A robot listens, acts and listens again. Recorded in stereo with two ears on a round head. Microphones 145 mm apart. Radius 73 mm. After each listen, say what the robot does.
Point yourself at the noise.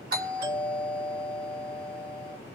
Turn 60° right.
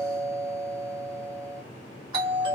Turn 35° right.
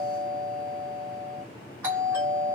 Turn 15° right.
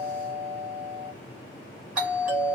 Turn 10° right.
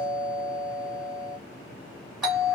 Found it: a doorbell, straight ahead, 1 to 2 m away.